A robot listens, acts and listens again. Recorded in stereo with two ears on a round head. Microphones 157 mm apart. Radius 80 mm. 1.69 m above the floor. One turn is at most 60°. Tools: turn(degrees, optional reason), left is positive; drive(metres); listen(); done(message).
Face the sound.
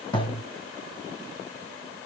turn(degrees=25, reason="The thud: about 25° left or 155° left.")
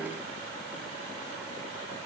listen()
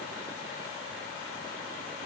done("I heard a thud, but can't make it out now. It was about straight ahead or 130° left.")